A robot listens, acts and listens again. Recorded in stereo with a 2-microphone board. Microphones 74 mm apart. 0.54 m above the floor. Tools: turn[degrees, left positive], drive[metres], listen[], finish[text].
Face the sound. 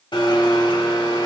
Action: turn[90]
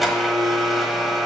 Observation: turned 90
Action: finish[Facing the blender.]